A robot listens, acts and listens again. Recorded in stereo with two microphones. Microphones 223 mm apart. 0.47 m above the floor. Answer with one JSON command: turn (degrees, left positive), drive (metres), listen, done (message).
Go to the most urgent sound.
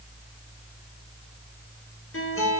{"listen": true}
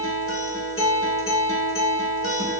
{"listen": true}
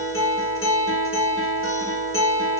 {"done": "I can't make out anything urgent to turn to."}